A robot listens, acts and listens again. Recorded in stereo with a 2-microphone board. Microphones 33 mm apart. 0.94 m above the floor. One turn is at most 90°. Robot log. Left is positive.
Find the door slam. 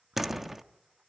cmd yaw -30
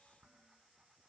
cmd idle
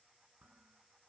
end: I heard a door slam, but can't make it out now. It was about 20° left or 140° right.